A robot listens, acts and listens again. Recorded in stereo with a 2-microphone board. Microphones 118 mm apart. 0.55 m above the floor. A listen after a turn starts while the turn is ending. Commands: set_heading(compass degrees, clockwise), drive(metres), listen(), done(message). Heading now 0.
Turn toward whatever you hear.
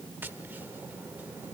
set_heading(15)
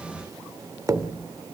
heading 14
set_heading(164)
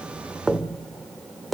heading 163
done("Facing the tapping.")